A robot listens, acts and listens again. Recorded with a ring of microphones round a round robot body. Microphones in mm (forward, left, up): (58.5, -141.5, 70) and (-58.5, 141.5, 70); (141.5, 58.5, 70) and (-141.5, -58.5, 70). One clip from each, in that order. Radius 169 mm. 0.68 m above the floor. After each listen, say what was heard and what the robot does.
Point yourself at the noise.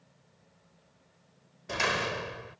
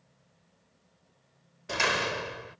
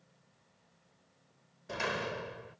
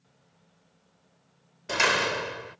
The door slam: straight behind. Turn 180° left.
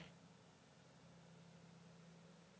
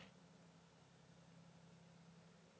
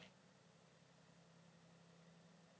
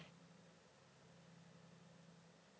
Facing where the door slam came from. I can't hear it now.